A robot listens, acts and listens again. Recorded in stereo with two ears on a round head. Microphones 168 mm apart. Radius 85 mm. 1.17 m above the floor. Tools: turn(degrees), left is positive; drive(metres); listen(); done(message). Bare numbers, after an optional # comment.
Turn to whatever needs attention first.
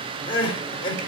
# The crying: about 30° left or 150° left.
turn(30)
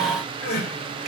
# So it is at 120° left.
turn(120)
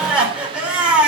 done("Found it: crying, straight ahead, 2 to 4 m away.")